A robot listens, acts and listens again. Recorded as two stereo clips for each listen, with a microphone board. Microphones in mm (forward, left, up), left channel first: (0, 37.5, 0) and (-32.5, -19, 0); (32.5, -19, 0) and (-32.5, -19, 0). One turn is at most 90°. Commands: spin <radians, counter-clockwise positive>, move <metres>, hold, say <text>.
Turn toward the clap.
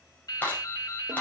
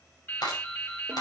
say Found it: a clap, straight ahead, over 4 m away.